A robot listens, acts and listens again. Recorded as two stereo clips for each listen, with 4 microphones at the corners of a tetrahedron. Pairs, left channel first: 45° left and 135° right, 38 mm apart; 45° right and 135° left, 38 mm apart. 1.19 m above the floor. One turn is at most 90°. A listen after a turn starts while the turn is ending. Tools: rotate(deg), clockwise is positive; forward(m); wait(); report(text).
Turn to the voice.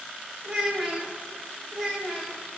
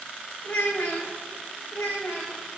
rotate(55)
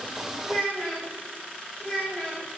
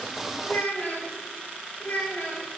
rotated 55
rotate(15)
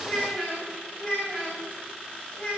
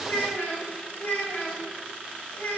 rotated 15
report("Found it: a child speaking, straight ahead.")